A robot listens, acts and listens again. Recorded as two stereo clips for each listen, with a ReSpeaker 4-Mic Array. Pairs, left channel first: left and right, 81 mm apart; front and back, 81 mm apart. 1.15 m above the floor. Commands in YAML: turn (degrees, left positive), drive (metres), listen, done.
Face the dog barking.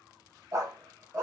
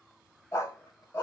turn: -35
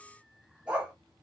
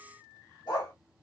turn: -15
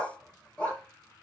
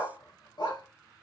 turn: 20
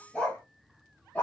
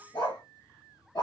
turn: 25
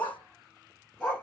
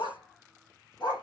turn: 15
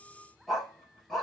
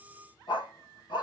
done: "Facing the dog barking."